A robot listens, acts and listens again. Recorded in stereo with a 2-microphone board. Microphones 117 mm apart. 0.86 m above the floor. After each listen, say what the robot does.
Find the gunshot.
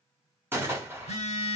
Turn 20° right.
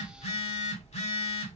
Keep listening.
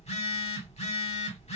I heard a gunshot, but can't make it out now. It was about straight ahead or 140° right.